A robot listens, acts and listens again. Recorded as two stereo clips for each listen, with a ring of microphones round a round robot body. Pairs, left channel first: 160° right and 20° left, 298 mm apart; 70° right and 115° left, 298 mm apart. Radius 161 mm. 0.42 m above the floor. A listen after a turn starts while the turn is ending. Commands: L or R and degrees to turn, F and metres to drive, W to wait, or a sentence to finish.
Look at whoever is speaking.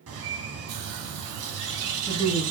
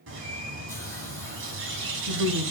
L100
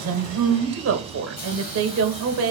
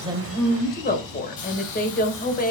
R10
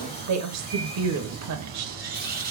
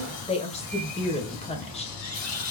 Facing the woman speaking.